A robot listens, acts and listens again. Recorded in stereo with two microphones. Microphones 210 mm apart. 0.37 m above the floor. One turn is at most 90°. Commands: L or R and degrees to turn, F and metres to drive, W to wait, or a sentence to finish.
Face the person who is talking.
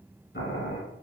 W
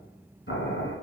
W
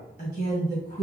L45
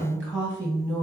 Found it: a woman speaking, straight ahead.